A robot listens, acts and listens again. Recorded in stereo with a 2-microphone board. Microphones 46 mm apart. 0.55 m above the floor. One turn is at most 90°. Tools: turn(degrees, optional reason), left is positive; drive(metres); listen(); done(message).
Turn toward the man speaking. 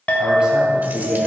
turn(degrees=-15, reason="The man speaking: about 15° right or 165° right.")
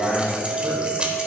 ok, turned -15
turn(degrees=-30, reason="The man speaking: about 30° right or 150° right.")
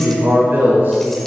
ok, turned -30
turn(degrees=-90, reason="So it is at 130° right.")
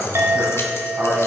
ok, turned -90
turn(degrees=-60, reason="The man speaking is now 60° right.")
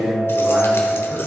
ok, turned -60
turn(degrees=-30, reason="The man speaking is now 30° right.")
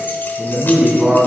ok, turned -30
turn(degrees=-15, reason="The man speaking is now 15° right.")
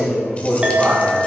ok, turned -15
done("Found it: a man speaking, straight ahead.")